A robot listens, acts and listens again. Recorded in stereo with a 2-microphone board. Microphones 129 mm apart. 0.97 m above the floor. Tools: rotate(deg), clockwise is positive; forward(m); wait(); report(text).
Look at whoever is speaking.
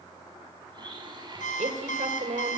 rotate(70)
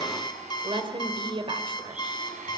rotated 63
rotate(45)
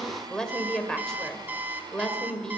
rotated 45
report("Facing the woman speaking.")